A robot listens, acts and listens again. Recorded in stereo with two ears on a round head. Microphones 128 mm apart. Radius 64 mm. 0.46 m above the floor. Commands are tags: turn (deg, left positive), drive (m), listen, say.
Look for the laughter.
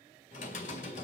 <listen/>
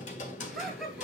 <turn deg="30"/>
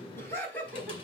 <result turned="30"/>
<turn deg="165"/>
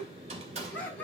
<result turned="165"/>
<turn deg="10"/>
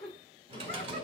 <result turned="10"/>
<turn deg="10"/>
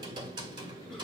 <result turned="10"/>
<listen/>
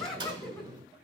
<say>Found it: laughter, straight ahead.</say>